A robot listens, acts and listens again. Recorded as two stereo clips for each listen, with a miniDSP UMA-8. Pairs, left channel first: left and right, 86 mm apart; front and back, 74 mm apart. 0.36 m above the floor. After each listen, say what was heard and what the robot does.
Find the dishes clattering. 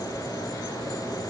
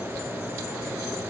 Keep listening.
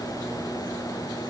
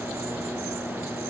Keep listening.
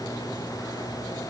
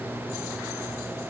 I can't make out dishes clattering.